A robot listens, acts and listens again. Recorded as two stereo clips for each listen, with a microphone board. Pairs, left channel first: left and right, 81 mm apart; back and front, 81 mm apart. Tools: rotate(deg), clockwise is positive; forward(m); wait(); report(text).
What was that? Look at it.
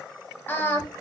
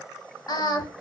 rotate(-150)
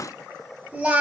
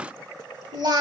rotate(20)
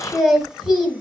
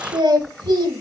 report("Found it: singing, straight ahead, 1 to 2 m away.")